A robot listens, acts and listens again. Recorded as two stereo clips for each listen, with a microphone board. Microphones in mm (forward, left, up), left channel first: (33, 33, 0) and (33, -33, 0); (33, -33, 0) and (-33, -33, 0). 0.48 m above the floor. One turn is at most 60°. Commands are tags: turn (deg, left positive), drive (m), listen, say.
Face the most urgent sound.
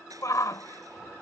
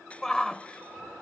<turn deg="60"/>
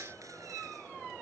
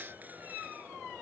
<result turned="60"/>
<turn deg="20"/>
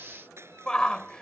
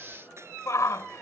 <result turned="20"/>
<turn deg="15"/>
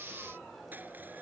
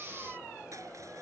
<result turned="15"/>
<listen/>
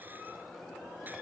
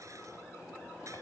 <listen/>
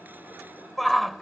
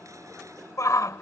<say>Facing the shout.</say>